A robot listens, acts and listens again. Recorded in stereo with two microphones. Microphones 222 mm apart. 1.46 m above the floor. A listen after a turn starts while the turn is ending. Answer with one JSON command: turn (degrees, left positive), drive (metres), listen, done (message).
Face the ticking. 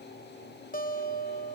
{"listen": true}
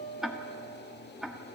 {"turn": 30}
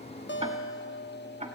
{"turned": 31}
{"turn": -30}
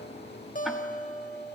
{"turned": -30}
{"listen": true}
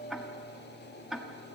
{"done": "Found it: ticking, straight ahead, 1 to 2 m away."}